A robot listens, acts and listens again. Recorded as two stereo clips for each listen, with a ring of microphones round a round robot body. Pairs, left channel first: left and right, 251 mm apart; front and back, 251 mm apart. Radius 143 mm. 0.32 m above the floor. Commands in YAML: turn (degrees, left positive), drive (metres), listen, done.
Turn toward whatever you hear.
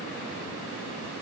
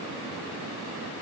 listen: true
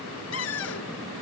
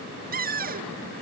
turn: 130
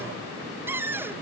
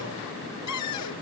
turn: -10
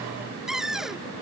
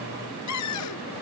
done: "Facing the cupboard door."